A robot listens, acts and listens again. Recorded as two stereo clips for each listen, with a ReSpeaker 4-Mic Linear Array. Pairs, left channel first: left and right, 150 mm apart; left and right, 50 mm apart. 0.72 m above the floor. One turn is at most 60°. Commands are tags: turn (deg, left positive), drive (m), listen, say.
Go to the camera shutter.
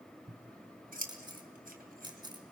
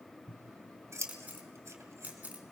<turn deg="-30"/>
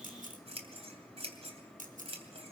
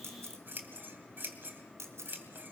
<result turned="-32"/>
<turn deg="-60"/>
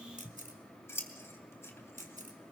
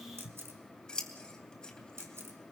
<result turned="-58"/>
<turn deg="-60"/>
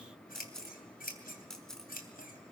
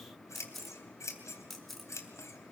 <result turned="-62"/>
<drive m="1.0"/>
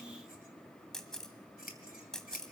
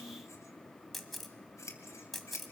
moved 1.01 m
<drive m="1.0"/>
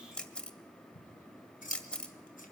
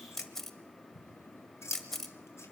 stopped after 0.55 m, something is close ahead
<say>I am next to the camera shutter.</say>